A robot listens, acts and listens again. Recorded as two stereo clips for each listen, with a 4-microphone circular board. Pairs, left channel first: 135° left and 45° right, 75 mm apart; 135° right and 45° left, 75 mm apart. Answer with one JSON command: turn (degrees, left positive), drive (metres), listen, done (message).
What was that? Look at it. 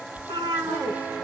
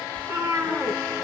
{"turn": -25}
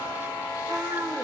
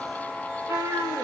{"done": "Facing the cat meowing."}